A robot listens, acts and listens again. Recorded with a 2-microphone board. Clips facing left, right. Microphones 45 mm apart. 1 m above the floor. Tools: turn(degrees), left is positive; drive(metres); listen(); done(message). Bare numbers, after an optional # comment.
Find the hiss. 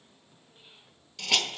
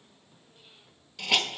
turn(-30)
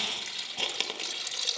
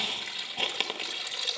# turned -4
turn(-30)
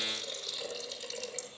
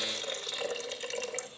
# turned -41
# So it is at 125° right.
turn(-125)
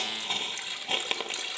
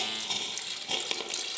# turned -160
# The hiss is now 35° left.
turn(35)
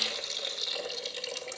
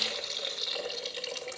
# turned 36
done("Found it: a hiss, straight ahead, 1 to 2 m away.")